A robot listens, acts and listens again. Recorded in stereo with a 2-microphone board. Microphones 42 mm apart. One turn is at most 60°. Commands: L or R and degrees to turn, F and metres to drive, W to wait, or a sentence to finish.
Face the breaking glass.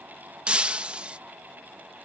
R25
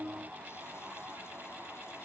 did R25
W
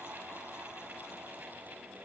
I heard breaking glass, but can't make it out now. It was about straight ahead or 130° right.